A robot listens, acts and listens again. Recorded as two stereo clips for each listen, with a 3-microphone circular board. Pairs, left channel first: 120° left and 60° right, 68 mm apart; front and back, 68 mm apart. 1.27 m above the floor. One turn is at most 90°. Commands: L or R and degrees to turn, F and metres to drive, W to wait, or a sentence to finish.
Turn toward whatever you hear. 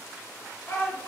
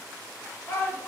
L55
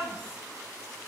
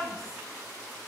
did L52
W
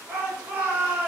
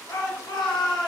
Facing the shout.